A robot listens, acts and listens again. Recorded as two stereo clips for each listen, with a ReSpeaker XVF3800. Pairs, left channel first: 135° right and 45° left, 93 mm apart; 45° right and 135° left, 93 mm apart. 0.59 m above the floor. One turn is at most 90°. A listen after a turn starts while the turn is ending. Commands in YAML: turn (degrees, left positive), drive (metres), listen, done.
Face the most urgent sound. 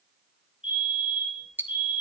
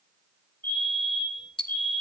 turn: -90
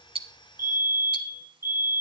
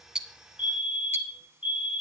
turn: -20
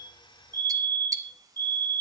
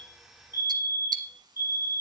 done: "Found it: a fire alarm, straight ahead."